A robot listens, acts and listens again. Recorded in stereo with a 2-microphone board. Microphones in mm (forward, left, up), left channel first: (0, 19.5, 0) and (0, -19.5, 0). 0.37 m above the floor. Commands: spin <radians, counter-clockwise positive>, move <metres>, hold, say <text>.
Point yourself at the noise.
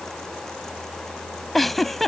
spin 0.52
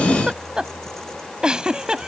spin -0.44
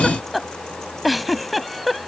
say Found it: a giggle, straight ahead.